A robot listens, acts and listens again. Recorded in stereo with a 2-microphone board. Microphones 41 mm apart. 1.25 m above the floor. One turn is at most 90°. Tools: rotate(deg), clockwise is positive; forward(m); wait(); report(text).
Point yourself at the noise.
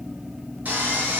rotate(40)
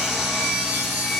report("Facing the sawing.")